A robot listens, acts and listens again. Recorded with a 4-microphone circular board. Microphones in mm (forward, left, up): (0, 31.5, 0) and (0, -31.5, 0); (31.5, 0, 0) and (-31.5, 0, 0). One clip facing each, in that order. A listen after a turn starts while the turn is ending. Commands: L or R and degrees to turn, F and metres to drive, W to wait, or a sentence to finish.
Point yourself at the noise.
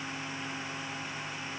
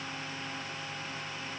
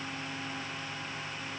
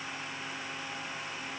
W
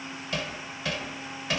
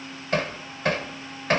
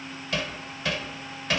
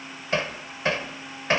R125
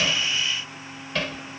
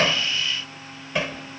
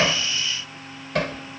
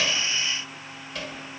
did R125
R20
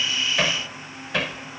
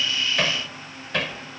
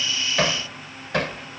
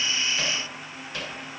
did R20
Facing the hammering.